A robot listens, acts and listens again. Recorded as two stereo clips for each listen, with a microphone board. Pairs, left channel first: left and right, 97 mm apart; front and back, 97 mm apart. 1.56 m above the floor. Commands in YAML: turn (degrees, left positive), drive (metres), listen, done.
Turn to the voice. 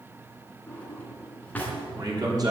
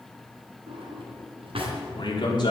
turn: -40
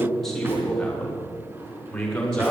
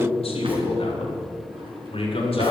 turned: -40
turn: 10
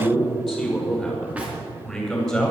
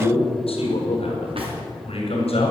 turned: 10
done: "Facing the man speaking, over 4 m away."